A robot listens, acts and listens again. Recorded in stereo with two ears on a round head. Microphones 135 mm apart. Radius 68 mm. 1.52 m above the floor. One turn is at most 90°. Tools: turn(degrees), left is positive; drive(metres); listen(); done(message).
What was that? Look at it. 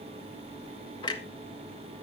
turn(degrees=25)
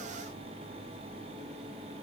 listen()
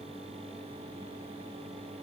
done("I heard a clunk, but can't make it out now. It was about straight ahead or 130° left.")